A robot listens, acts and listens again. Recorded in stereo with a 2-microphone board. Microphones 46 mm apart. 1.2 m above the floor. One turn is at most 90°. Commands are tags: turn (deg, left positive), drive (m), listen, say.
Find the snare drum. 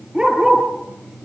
<listen/>
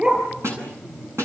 <turn deg="-75"/>
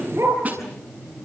<turn deg="-30"/>
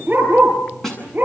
<turn deg="10"/>
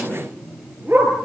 <listen/>
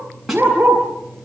<say>Facing the snare drum.</say>